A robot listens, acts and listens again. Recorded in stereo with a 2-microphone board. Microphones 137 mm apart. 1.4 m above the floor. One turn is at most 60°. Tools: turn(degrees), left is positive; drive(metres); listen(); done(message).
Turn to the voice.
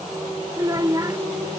turn(degrees=-25)
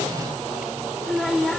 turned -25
done("Facing the child speaking.")